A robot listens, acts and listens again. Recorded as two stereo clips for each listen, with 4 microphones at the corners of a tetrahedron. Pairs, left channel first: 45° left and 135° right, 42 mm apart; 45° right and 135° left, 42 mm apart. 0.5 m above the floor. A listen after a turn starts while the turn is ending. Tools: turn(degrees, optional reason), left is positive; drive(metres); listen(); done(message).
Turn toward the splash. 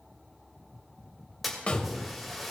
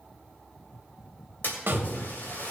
turn(degrees=-45, reason="The splash: 45° right.")
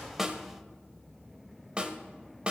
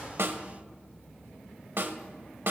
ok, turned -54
turn(degrees=10, reason="Nothing new. It was at 10° left.")
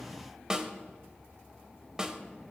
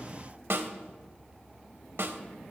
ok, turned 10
done("Facing where the splash came from. I can't hear it now.")